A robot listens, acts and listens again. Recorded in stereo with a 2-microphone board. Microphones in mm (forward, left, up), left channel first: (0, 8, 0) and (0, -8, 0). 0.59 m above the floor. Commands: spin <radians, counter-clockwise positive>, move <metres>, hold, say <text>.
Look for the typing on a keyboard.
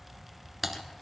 spin -0.52
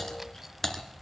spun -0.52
spin 0.35
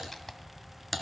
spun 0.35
say Found it: typing on a keyboard, straight ahead.